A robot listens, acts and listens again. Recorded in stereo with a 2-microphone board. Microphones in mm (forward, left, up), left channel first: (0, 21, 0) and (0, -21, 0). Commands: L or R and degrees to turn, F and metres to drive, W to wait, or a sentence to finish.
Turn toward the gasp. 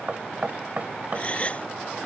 L30
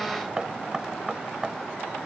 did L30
W
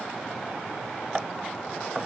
I heard a gasp, but can't make it out now. It was about straight ahead or 120° left.